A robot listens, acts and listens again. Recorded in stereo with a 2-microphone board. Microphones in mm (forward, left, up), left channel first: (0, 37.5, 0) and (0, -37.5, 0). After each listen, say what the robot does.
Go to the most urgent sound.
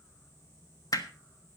Keep listening.
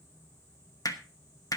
Keep listening.
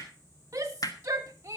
Turn 40° right.
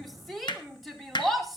Drive 1.0 m forward.
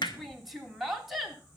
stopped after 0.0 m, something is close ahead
Something is in my way. I am facing the shout but have not reached it.